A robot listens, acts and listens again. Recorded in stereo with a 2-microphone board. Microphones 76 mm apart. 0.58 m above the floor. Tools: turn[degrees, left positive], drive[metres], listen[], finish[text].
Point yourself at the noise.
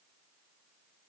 Action: listen[]
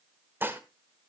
Thought: The dishes clattering: about 25° right or 155° right.
Action: turn[-25]
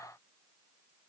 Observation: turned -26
Action: listen[]
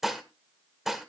Action: finish[Facing the dishes clattering.]